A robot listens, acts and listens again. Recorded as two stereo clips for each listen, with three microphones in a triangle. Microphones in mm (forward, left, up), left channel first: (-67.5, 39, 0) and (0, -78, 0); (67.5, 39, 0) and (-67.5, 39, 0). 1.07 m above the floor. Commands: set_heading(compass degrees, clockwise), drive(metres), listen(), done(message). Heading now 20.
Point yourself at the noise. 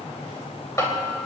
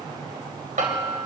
set_heading(195)
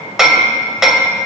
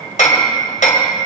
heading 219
set_heading(194)
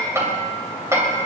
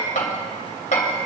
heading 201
set_heading(191)
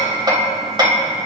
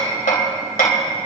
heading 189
done("Found it: hammering, straight ahead, 2 to 4 m away.")